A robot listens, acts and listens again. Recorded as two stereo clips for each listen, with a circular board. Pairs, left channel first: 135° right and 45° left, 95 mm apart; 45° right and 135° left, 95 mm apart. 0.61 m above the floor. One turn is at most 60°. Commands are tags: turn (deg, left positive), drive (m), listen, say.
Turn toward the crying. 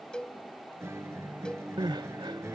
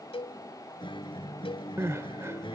<turn deg="60"/>
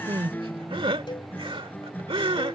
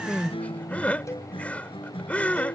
<turn deg="30"/>
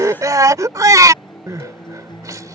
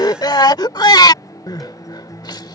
<say>Facing the crying.</say>